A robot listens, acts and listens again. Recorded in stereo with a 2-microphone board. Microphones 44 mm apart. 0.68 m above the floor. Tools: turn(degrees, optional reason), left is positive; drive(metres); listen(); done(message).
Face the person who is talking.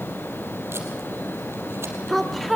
turn(degrees=30)
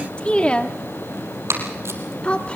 turn(degrees=150, reason="So it is at 150° left.")
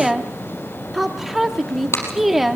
done("Facing the woman speaking, under 1 m away.")